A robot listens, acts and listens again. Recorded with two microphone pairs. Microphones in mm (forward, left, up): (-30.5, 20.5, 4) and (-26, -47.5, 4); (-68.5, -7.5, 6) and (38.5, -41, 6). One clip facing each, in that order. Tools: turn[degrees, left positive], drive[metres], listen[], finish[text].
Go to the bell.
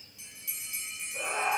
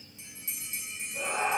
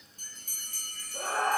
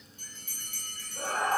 Thought: The bell: 145° right.
Action: turn[-145]
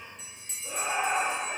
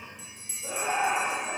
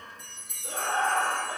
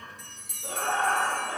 Action: drive[1.0]
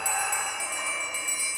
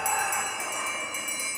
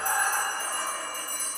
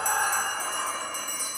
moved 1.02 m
Thought: The bell is now 10° right.
Action: turn[-10]
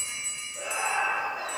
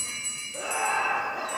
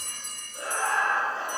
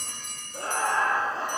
Action: drive[1.0]
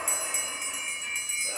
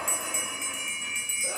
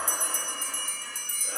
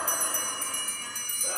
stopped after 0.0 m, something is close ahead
Action: finish[I am next to the bell.]